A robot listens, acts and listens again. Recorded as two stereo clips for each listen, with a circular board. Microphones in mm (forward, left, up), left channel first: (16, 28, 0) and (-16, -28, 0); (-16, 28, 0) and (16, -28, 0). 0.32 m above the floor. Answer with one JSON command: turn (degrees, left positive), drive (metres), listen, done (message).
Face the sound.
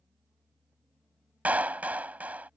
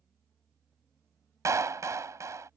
{"turn": -60}
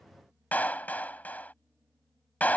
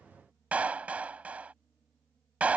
{"done": "Found it: a clap, straight ahead."}